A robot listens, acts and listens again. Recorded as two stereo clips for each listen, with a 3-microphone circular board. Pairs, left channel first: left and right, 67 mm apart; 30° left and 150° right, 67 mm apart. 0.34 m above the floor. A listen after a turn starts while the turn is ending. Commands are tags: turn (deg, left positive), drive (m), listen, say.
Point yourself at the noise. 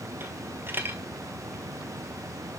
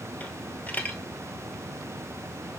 <turn deg="-35"/>
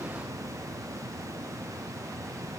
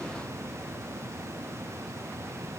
<say>Facing where the dropped coin came from. I can't hear it now.</say>